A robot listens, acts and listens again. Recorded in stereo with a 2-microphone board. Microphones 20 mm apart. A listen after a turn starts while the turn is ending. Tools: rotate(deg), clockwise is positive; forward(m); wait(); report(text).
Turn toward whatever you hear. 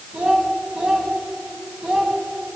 rotate(90)
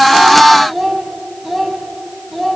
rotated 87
rotate(-10)
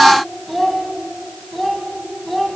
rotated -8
rotate(-10)
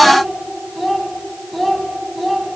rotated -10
report("Facing the child speaking.")